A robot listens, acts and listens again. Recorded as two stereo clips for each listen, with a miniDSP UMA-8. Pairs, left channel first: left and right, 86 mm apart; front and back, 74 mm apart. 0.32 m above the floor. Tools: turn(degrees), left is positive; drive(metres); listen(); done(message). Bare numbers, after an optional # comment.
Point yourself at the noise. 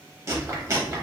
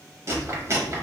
# The chewing: 140° right.
turn(-140)
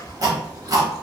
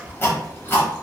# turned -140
# The chewing is now 55° right.
turn(-55)
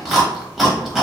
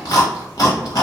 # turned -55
done("Found it: chewing, straight ahead.")